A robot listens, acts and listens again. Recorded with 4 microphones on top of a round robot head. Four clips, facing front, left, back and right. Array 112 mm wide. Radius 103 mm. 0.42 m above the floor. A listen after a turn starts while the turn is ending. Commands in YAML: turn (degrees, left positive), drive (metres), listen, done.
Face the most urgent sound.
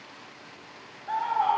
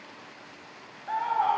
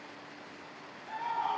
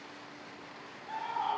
turn: 55
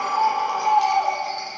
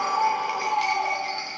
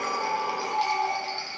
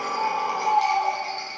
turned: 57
done: "Found it: a scream, straight ahead."